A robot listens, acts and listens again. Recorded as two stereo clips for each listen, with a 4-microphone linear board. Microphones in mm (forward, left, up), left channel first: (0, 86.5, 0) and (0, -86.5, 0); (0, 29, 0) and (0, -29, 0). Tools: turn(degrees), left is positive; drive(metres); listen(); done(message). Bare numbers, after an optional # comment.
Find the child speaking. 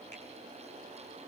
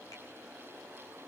listen()
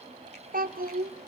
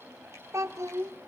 # The child speaking: about 60° right or 120° right.
turn(-60)
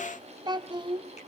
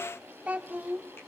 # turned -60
# So it is at 30° right.
turn(-30)
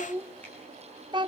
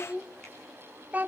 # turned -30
# The child speaking is now 25° right.
turn(-25)
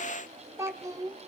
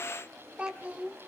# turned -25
# The child speaking is now 20° right.
turn(-20)
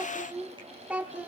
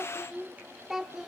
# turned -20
# The child speaking is now 10° right.
turn(-10)
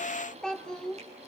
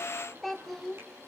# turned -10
done("Facing the child speaking, 1 to 2 m away.")